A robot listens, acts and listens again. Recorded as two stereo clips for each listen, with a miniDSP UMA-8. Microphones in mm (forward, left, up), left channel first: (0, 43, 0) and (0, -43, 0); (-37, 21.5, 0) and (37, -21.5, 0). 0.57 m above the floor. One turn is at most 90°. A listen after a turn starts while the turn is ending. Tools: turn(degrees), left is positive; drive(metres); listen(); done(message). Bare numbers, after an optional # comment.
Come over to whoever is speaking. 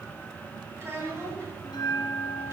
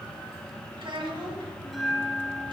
# The child speaking: 30° right.
turn(-30)
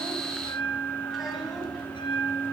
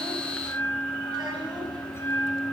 listen()
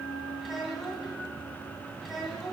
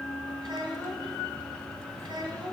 drive(1.0)
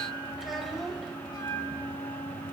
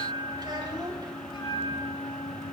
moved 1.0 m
drive(1.0)
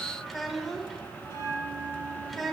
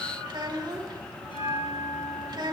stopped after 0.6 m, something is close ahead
done("I am next to the child speaking.")